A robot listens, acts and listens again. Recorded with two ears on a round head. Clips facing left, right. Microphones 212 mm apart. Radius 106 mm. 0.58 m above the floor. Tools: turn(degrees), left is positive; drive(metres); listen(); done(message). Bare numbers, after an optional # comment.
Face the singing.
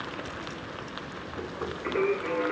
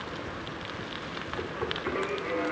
# The singing: about 55° left or 125° left.
turn(55)
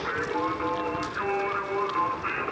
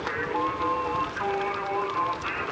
# So it is at 30° left.
turn(30)
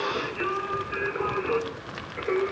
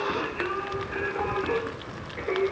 # The singing is now 15° left.
turn(15)
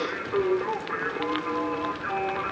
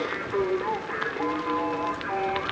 done("Found it: singing, straight ahead, 2 to 4 m away.")